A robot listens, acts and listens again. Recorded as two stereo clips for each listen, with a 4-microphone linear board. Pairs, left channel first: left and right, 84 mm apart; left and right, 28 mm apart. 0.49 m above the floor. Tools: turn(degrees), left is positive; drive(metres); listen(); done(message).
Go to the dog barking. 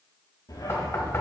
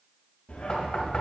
turn(degrees=55)
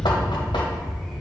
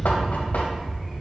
drive(metres=1.0)
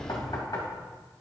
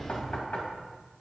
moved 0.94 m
drive(metres=1.0)
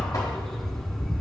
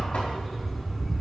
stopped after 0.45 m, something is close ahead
turn(degrees=10)
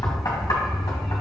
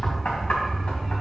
done("Arrived at the dog barking, straight ahead.")